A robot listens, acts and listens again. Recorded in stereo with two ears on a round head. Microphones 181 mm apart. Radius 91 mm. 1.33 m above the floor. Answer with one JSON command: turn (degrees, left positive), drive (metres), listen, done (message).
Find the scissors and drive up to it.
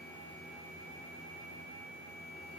{"listen": true}
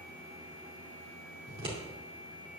{"turn": -25}
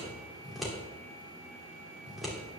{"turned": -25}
{"drive": 1.0}
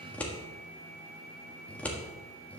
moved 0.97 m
{"turn": 10}
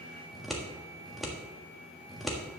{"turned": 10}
{"drive": 1.0}
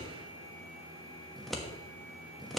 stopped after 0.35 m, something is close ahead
{"done": "I am next to the scissors."}